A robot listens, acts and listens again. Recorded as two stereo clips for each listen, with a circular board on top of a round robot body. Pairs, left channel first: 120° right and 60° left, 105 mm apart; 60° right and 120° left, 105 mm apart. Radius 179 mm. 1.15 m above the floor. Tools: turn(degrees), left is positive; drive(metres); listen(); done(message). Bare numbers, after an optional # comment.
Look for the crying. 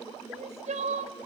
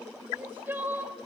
# The crying: 45° left.
turn(45)
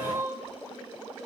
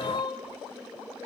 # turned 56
# The crying is now 10° right.
turn(-10)
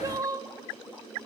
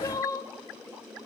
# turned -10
done("Found it: crying, straight ahead, 1 to 2 m away.")